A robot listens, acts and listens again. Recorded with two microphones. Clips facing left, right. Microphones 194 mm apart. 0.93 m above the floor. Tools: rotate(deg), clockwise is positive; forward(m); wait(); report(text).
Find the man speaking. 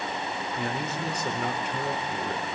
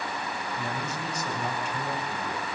rotate(-65)
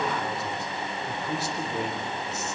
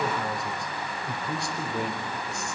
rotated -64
report("Facing the man speaking.")